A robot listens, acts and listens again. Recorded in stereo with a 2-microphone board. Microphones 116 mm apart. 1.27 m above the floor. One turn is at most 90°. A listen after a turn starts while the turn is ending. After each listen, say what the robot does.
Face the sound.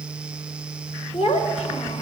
Turn 75° left.
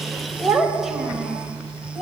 Facing the child speaking, over 4 m away.